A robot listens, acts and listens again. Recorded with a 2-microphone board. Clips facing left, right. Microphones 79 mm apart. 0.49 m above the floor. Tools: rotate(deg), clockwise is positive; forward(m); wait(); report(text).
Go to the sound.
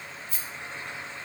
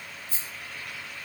rotate(70)
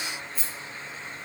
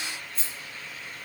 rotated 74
forward(1.0)
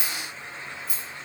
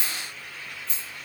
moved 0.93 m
rotate(-10)
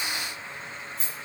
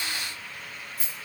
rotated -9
forward(1.0)
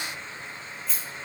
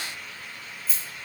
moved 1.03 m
forward(1.0)
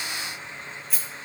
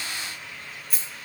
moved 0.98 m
forward(1.0)
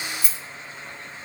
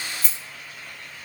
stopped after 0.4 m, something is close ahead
report("I am next to the rattle.")